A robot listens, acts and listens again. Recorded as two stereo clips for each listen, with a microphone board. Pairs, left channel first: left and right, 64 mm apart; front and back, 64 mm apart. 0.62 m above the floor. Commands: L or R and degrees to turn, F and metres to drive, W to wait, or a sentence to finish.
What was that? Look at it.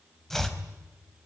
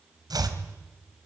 L175
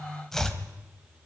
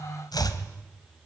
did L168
Found it: chopping, straight ahead, 2 to 4 m away.